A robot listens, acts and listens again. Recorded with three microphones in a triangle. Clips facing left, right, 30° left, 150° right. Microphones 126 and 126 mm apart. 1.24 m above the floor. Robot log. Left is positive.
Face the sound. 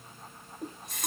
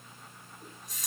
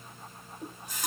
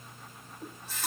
note: The running tap: 105° left.
cmd yaw +105
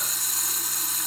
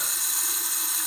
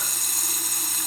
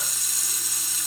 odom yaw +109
end: Facing the running tap, 1 to 2 m away.